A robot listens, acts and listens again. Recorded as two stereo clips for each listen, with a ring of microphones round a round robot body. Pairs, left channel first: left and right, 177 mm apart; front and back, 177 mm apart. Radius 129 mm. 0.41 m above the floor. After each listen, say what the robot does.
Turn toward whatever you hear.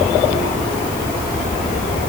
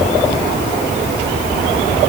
Keep listening.
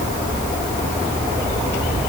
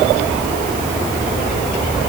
Keep listening.
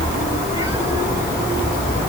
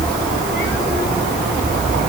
I can't make out anything.